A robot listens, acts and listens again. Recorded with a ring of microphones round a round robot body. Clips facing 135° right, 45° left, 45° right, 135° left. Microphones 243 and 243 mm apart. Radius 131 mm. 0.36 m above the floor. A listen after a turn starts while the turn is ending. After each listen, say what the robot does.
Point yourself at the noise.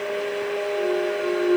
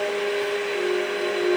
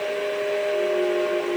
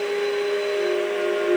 Turn 150° left.
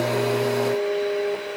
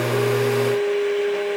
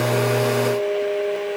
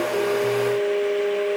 Facing where the clunk came from. I can't hear it now.